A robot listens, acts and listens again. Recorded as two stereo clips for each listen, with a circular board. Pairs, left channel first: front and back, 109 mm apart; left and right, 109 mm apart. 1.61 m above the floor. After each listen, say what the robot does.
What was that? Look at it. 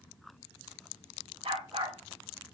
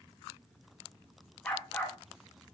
Turn 160° left.
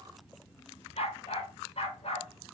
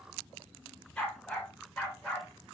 Found it: a dog barking, straight ahead.